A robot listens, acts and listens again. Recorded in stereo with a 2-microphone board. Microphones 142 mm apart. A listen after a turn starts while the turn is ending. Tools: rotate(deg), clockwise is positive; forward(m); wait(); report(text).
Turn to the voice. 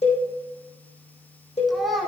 rotate(-30)
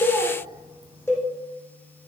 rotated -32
wait()
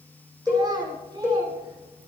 rotate(30)
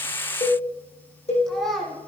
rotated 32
report("Found it: a child speaking, straight ahead.")